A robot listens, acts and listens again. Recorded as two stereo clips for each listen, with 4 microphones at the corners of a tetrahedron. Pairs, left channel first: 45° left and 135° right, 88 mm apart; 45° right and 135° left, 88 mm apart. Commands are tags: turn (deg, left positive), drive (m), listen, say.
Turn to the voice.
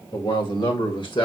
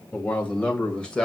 <turn deg="35"/>
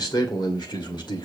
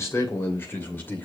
<turn deg="20"/>
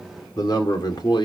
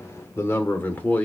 <turn deg="25"/>
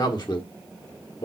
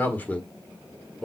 <turn deg="40"/>
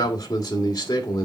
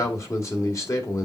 <say>Facing the man speaking, 2 to 4 m away.</say>